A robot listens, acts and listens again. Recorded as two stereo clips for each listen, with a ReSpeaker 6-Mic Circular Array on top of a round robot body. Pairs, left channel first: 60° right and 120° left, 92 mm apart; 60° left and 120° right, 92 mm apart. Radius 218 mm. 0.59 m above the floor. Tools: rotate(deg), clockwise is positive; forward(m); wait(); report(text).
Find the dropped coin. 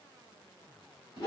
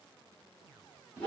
wait()
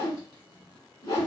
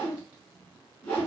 wait()
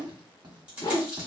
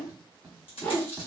rotate(-45)
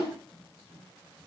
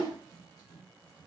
report("I heard a dropped coin from this way, but can't make it out now.")